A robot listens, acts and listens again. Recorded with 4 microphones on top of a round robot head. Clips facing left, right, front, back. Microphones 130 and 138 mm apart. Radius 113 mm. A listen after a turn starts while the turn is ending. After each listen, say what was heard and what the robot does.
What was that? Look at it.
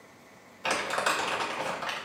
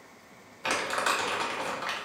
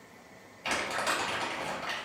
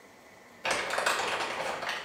The crumpling: 175° left. Turn 175° left.
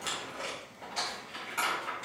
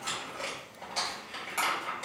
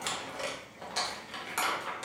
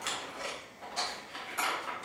The crumpling is now 20° right. Turn 20° right.
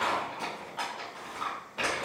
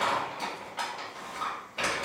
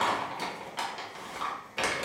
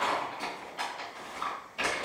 Found it: crumpling, straight ahead, 1 to 2 m away.